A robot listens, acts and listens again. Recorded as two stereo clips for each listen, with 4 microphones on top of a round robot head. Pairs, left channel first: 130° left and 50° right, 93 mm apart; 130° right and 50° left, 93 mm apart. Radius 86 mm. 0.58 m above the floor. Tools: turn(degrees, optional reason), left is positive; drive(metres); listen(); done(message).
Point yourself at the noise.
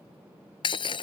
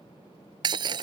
turn(degrees=90, reason="The breaking glass: 90° left.")
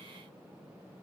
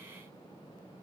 done("I heard breaking glass from this way, but can't make it out now.")